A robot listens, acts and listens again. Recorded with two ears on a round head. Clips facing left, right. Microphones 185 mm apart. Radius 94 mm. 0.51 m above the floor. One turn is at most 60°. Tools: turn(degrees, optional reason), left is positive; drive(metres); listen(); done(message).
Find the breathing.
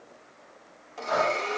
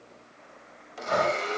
turn(degrees=-30, reason="The breathing: about 30° right or 150° right.")
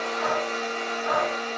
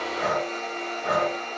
turn(degrees=-60, reason="So it is at 115° right.")
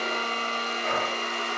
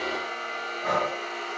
turn(degrees=-60, reason="The breathing is now 70° right.")
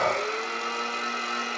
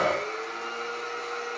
turn(degrees=-25, reason="The breathing is now 25° right.")
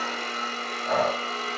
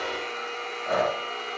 done("Found it: breathing, straight ahead.")